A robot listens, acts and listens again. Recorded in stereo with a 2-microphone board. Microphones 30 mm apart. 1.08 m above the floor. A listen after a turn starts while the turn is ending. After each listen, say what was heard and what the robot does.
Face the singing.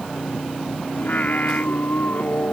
The singing: about 60° left or 120° left. Turn 60° left.
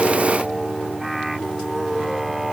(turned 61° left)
So it is at 10° right. Turn 10° right.
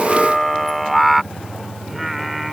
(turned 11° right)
Found it: singing, straight ahead.